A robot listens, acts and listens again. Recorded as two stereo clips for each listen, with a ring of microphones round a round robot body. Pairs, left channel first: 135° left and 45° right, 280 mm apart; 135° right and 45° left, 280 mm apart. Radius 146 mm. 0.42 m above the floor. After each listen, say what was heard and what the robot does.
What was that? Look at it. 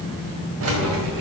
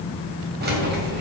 The keys jangling: 10° right. Turn 10° right.
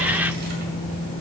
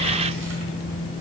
Keep listening.
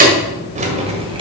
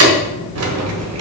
The keys jangling is now 20° left. Turn 20° left.
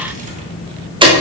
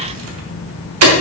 The keys jangling is now 25° left. Turn 25° left.
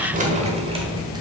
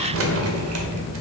The keys jangling is now 20° left. Turn 20° left.
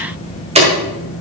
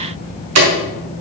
The keys jangling is now 20° left. Turn 20° left.
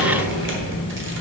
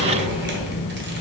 Facing the keys jangling, 1 to 2 m away.